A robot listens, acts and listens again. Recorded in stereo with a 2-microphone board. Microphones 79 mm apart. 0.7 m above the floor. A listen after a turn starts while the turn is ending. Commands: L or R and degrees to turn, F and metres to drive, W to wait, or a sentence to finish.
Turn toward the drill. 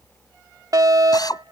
L60
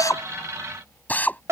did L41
L20
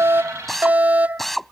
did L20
Facing the drill.